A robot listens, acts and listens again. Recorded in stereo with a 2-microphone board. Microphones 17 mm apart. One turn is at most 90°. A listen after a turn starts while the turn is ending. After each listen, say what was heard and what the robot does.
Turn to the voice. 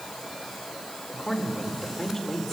Turn 30° left.
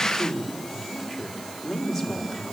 Facing the man speaking, 2 to 4 m away.